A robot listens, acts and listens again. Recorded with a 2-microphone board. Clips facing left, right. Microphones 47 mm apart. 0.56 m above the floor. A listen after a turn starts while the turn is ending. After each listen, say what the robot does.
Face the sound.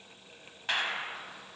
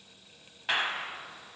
Turn 30° right.
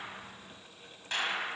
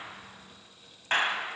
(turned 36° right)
Turn 140° right.
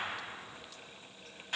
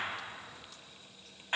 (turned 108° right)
Turn 30° right.
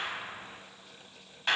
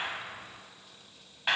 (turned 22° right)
Turn 10° right.
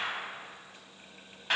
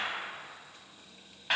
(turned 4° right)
Facing the clap.